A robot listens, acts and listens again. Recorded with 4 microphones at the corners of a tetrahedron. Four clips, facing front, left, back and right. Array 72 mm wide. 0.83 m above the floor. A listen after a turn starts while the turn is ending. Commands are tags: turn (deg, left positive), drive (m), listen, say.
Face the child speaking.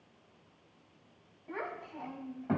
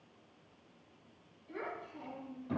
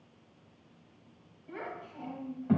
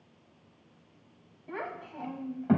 <turn deg="-70"/>
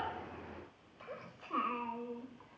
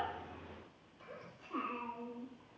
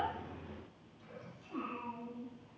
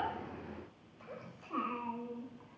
<turn deg="-20"/>
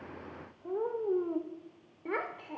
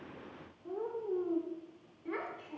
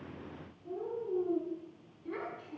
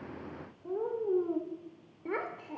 <turn deg="-30"/>
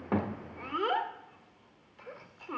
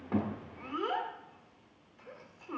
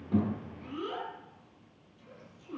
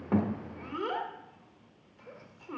<say>Facing the child speaking, 1 to 2 m away.</say>